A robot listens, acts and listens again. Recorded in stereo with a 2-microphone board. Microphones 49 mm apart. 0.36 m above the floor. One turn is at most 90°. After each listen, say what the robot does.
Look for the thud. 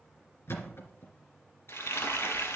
Turn 65° left.
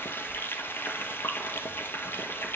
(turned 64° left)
Keep listening.
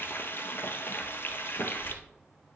I heard a thud, but can't make it out now. It was about straight ahead or 55° left.